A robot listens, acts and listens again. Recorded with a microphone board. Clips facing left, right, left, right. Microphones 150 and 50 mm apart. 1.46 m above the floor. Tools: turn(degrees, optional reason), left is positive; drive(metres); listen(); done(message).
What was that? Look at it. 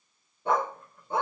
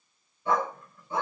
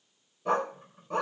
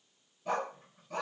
turn(degrees=65, reason="The dog barking: about 65° left or 115° left.")
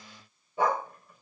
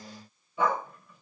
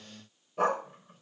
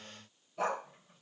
turn(degrees=45, reason="So it is at 45° left.")
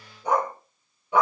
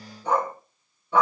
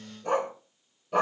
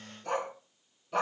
turn(degrees=15, reason="The dog barking is now 15° left.")
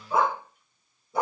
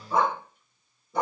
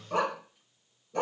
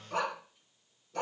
done("Facing the dog barking.")